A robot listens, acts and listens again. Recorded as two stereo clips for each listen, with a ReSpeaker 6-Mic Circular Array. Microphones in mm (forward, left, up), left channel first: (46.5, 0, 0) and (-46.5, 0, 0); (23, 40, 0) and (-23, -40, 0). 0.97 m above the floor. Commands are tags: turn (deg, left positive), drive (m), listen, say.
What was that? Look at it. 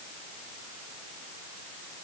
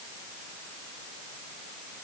<listen/>
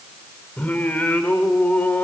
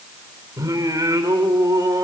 <turn deg="-75"/>
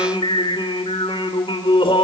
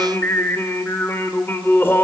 <say>Facing the singing, 2 to 4 m away.</say>